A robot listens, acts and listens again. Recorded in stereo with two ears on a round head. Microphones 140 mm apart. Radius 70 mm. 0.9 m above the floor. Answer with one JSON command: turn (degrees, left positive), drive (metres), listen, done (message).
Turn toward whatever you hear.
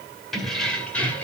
{"turn": 30}
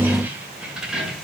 {"turn": 30}
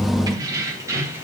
{"turn": -15}
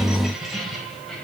{"done": "Facing the keys jangling, 2 to 4 m away."}